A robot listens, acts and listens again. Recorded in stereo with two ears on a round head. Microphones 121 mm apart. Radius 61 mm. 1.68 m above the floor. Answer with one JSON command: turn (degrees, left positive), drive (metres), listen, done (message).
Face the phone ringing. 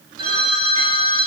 {"turn": -40}
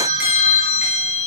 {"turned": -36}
{"turn": -105}
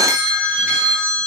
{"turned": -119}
{"turn": 15}
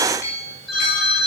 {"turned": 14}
{"done": "Facing the phone ringing."}